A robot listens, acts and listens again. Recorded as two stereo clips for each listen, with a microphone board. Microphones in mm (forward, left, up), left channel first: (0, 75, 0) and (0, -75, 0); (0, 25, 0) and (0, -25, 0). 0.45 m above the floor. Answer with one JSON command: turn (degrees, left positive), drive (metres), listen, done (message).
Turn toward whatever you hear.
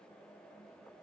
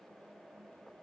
{"listen": true}
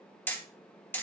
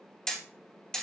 {"turn": 30}
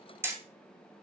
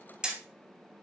{"turn": -15}
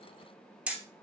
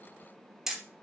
{"turn": -10}
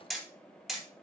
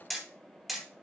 {"done": "Found it: hammering, straight ahead, 2 to 4 m away."}